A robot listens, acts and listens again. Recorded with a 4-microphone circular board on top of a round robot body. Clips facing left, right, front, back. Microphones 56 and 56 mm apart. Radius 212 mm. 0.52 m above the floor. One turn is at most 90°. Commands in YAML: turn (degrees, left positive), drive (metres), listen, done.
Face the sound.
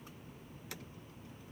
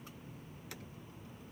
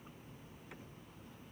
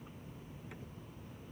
listen: true
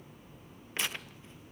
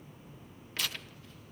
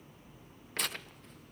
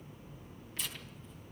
turn: 25
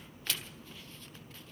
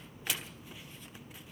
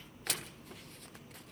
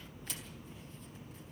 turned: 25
turn: -15
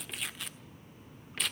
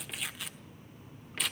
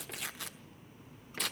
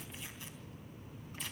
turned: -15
done: "Found it: tearing paper, straight ahead, 1 to 2 m away."